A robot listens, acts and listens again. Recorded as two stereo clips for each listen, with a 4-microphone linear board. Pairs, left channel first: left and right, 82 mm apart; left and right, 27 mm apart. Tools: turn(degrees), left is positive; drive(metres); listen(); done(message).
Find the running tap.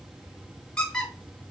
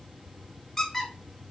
listen()
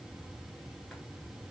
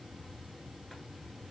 listen()
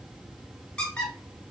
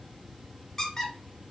done("I can't make out a running tap to turn to.")